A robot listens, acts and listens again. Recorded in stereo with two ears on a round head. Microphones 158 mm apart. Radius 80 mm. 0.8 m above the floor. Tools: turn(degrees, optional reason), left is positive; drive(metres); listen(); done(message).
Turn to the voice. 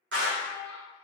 turn(degrees=30)
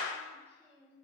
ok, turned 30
turn(degrees=-15, reason="So it is at 15° right.")
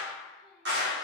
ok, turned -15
listen()
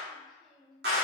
done("Facing the child speaking.")